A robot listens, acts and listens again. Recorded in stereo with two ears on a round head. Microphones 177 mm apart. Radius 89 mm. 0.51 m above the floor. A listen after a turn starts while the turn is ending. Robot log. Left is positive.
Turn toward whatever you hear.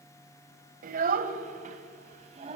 note: The child speaking: about 30° right or 150° right.
cmd yaw -30
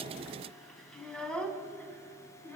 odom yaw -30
note: So it is at 10° left.
cmd yaw +10
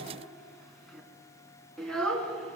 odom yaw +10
end: Found it: a child speaking, straight ahead.